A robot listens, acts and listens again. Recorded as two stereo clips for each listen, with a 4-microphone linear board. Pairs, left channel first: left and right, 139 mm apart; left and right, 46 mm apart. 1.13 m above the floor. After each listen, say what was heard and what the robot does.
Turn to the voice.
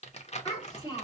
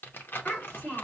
The child speaking: about 30° left or 150° left. Turn 30° left.
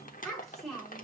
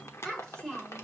Found it: a child speaking, straight ahead, 2 to 4 m away.